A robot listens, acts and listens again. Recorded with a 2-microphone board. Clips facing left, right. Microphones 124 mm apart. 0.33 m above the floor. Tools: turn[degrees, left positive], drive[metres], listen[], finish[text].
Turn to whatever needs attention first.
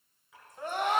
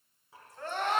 Action: turn[30]
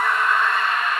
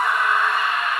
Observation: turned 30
Thought: So it is at 15° right.
Action: turn[-15]
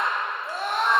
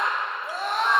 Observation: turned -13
Action: finish[Facing the scream, 2 to 4 m away.]